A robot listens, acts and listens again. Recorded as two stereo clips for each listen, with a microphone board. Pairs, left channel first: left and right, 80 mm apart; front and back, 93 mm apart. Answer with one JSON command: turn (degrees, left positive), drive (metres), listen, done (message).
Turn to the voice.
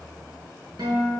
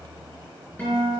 {"listen": true}
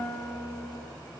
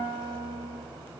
{"listen": true}
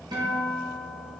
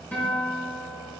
{"done": "I can't make out anyone speaking, only a guitar."}